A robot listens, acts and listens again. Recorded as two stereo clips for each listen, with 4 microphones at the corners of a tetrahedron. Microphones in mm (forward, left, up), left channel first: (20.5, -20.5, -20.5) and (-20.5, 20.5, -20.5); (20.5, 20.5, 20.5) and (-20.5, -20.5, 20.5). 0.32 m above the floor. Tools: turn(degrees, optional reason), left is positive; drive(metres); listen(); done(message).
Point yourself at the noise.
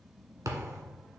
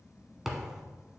turn(degrees=140, reason="The thud: 140° left.")
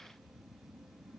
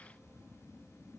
done("I heard a thud from this way, but can't make it out now.")